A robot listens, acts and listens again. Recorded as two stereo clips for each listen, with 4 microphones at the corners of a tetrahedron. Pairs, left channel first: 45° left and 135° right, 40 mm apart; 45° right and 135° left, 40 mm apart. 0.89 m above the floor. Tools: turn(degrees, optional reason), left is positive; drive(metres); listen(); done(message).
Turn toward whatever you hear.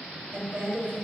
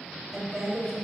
turn(degrees=-140, reason="The woman speaking: 140° right.")
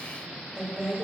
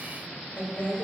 turn(degrees=-70, reason="The woman speaking is now 70° right.")
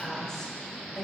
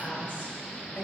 turn(degrees=-35, reason="The woman speaking is now 35° right.")
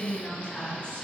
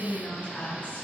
turn(degrees=-10, reason="The woman speaking is now 10° right.")
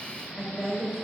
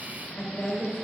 turn(degrees=-15, reason="The woman speaking is now 15° right.")
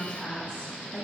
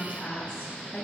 done("Found it: a woman speaking, straight ahead.")